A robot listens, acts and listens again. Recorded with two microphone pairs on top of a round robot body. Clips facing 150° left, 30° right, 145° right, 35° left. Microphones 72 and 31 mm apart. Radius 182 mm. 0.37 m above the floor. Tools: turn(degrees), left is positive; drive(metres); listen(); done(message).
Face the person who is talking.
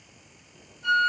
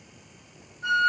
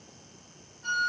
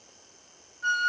listen()
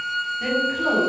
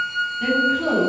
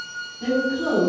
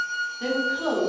turn(degrees=75)
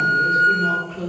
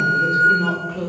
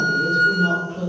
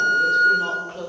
turn(degrees=-15)
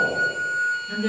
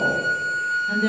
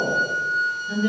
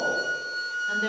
done("Facing the woman speaking.")